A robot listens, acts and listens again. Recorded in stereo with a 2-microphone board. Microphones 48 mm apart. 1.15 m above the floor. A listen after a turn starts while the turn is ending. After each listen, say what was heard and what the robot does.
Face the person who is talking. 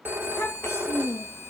The child speaking: about 65° left or 115° left. Turn 65° left.
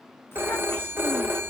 Keep listening.
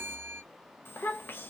So it is at 45° left. Turn 45° left.
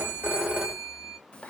The child speaking is now 20° left. Turn 20° left.
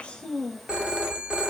Found it: a child speaking, straight ahead.